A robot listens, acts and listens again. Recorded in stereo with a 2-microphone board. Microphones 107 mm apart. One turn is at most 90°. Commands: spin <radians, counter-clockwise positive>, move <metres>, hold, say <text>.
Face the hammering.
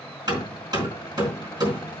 spin -0.70
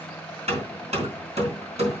spin -1.57
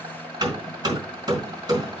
spin -0.70
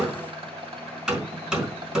spin -0.17
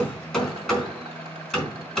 say Facing the hammering.